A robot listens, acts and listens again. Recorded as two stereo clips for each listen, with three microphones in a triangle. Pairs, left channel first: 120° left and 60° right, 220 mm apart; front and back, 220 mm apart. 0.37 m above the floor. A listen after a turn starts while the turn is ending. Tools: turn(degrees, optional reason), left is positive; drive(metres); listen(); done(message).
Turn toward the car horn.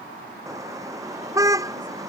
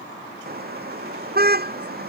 turn(degrees=-135, reason="The car horn: 135° right.")
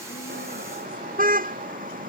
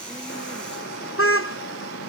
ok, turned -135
turn(degrees=-10, reason="The car horn is now 10° right.")
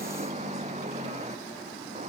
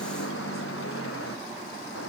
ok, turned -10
done("Facing the car horn.")